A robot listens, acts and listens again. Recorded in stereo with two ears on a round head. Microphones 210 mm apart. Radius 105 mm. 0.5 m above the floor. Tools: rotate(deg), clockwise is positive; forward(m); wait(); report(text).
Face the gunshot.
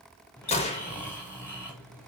rotate(-25)
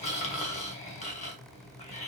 wait()
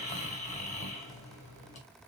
report("I heard a gunshot, but can't make it out now. It was about straight ahead or 130° left.")